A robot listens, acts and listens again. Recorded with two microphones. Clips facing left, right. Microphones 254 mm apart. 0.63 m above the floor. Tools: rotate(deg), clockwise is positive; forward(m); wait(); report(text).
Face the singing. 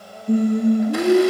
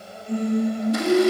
rotate(-55)
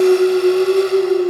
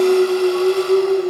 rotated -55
rotate(-70)
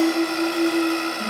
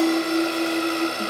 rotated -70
report("Found it: singing, straight ahead, over 4 m away.")